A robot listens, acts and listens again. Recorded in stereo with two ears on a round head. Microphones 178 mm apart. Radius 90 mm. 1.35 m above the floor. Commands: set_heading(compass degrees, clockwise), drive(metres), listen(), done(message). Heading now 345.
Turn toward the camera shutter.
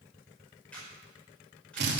set_heading(315)
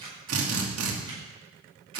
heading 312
set_heading(337)
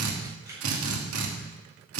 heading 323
set_heading(338)
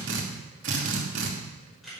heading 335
done("Found it: a camera shutter, straight ahead, over 4 m away.")